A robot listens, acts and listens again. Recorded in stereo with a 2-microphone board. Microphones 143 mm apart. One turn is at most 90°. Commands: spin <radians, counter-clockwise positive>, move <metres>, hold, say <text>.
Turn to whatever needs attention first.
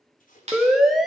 spin 0.52
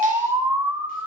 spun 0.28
spin -0.26
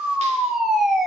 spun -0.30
say Found it: a siren, straight ahead, 2 to 4 m away.